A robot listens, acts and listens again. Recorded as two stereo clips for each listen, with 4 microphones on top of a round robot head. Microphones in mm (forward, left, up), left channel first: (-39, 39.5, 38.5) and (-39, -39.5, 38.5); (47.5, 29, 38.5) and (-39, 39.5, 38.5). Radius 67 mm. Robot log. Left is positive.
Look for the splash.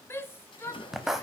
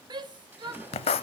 note: The splash: 105° left.
cmd yaw +105
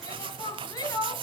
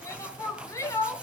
end: Facing where the splash came from. I can't hear it now.